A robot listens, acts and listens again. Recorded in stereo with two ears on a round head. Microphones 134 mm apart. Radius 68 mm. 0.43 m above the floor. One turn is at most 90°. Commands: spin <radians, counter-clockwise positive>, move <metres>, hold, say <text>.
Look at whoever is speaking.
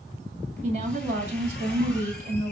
spin -0.87
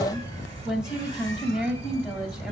say Facing the woman speaking.